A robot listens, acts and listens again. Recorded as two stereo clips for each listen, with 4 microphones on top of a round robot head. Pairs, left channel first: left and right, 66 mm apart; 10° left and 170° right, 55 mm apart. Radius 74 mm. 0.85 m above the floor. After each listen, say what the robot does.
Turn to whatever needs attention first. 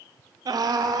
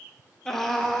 Turn 75° right.
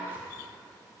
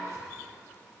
Keep listening.
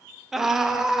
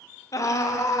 Facing the scream.